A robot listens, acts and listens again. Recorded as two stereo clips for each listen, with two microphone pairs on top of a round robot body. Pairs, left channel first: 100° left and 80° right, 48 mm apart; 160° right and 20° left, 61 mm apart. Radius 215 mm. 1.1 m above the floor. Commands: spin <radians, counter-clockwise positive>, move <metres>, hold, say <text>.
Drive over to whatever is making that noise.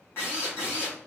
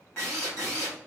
spin 2.53
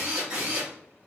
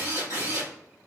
move 1.0
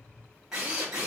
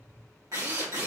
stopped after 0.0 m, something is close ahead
say Something is in my way. I am facing the drill but have not reached it.